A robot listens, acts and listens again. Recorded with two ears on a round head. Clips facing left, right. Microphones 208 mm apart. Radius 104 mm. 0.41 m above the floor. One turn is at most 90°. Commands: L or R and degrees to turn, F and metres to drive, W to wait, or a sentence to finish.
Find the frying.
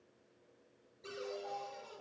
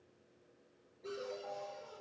W
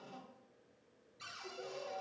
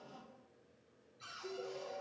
W
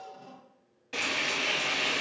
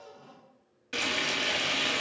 R20
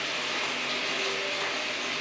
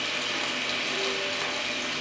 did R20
R90
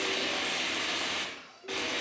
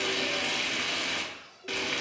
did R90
R40
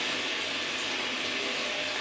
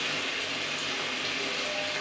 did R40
Found it: frying, straight ahead.